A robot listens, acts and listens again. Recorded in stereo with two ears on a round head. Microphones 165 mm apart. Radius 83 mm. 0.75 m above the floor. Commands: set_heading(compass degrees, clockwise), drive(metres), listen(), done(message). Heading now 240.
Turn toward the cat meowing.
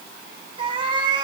set_heading(265)
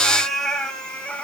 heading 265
done("Found it: a cat meowing, straight ahead, 1 to 2 m away.")